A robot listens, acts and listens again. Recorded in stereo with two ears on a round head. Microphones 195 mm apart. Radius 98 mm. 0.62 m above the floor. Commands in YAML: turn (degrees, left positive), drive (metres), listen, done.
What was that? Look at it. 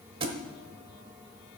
turn: -25
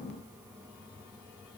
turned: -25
listen: true
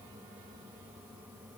done: "I heard a thud, but can't make it out now. It was about straight ahead or 130° right."